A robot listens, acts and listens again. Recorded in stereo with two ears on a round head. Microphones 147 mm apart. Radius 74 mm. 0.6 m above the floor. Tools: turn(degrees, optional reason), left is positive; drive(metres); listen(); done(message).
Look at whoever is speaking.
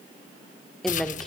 turn(degrees=30)
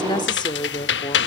turn(degrees=145, reason="So it is at 145° left.")
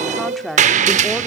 done("Facing the woman speaking, 1 to 2 m away.")